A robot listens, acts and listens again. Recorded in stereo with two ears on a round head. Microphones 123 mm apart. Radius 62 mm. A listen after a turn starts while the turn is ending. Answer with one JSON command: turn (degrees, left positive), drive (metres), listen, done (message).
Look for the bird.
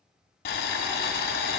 {"listen": true}
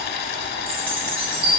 {"turn": -35}
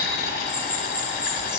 {"done": "Found it: a bird, straight ahead."}